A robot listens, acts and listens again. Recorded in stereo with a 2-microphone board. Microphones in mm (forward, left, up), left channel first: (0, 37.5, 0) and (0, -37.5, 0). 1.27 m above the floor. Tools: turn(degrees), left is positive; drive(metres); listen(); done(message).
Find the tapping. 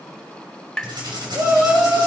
turn(degrees=30)
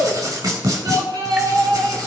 listen()
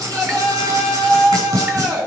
listen()
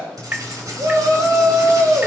turn(degrees=-20)
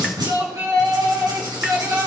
listen()
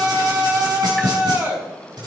listen()
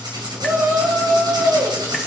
done("I heard tapping from this way, but can't make it out now.")